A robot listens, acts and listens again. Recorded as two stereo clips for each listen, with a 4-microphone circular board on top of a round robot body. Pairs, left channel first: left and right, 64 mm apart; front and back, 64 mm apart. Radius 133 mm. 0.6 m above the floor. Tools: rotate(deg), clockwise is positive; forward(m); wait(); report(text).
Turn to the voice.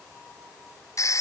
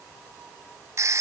wait()
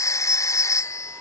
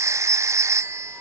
wait()
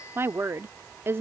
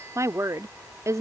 rotate(145)
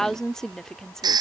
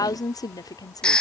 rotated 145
rotate(-10)
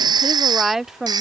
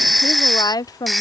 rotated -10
report("Found it: a woman speaking, straight ahead.")